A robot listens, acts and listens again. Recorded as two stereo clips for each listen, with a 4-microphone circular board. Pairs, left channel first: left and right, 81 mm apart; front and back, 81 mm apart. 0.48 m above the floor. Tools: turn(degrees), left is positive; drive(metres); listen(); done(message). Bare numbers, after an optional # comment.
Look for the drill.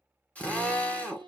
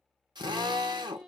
# The drill: 165° left.
turn(165)
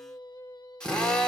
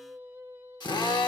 # The drill is now 10° left.
turn(10)
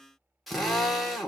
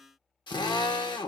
done("Found it: a drill, straight ahead.")